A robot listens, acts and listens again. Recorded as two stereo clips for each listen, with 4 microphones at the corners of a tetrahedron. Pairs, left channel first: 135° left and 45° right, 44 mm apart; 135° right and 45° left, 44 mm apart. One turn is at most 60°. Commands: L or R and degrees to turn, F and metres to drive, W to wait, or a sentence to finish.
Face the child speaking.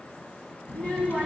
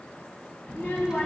R60
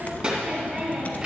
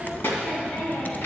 R60
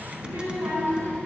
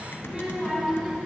R50
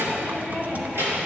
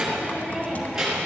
R30
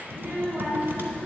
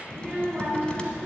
R10
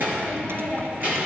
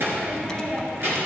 Found it: a child speaking, straight ahead, 2 to 4 m away.